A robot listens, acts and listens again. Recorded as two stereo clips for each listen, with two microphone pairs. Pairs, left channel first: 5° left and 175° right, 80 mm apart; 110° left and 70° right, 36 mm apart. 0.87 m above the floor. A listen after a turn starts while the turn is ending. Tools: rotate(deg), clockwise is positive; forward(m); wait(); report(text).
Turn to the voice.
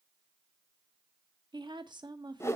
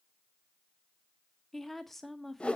rotate(170)
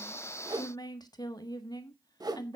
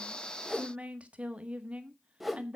rotate(25)
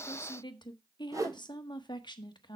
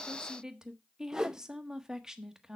report("Found it: a woman speaking, straight ahead, 1 to 2 m away.")